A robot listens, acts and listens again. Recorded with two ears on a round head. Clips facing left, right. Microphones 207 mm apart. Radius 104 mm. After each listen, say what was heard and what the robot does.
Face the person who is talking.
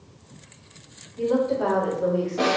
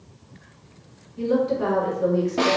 The woman speaking: about 30° right or 150° right. Turn 30° right.
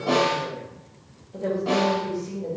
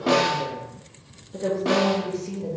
The woman speaking: about 35° right or 145° right. Turn 35° right.
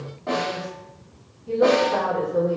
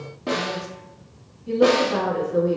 The woman speaking: about 35° right or 145° right. Turn 35° right.
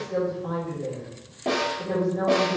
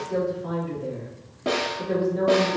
So it is at 10° right. Turn 10° right.
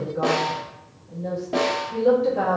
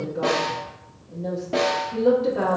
Found it: a woman speaking, straight ahead, 1 to 2 m away.